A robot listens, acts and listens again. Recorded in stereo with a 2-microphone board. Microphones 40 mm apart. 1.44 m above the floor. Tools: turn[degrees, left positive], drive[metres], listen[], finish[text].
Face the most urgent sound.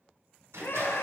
Thought: The scream: about 60° left or 120° left.
Action: turn[60]
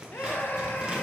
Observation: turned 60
Thought: So it is at 55° left.
Action: turn[55]
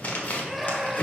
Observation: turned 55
Action: finish[Found it: a scream, straight ahead.]